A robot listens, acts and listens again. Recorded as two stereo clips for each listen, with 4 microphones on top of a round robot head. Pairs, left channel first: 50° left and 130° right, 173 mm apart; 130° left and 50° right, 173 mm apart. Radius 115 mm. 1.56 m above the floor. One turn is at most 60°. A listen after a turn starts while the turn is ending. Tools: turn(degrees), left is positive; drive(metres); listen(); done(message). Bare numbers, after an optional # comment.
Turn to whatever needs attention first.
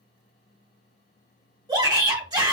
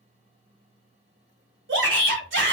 # The shout: 65° right.
turn(-60)
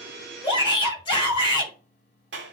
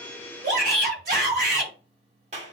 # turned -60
# The shout is now 15° right.
turn(-15)
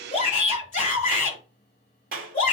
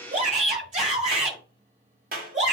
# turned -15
done("Facing the shout, over 4 m away.")